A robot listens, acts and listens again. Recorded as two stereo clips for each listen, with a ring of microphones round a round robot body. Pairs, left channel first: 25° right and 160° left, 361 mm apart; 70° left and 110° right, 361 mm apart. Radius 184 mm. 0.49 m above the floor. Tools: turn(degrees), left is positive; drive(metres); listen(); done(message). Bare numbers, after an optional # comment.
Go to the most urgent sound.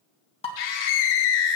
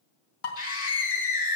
drive(1.0)
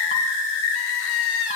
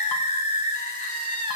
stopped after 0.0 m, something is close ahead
done("Blocked. The scream is further on, straight ahead.")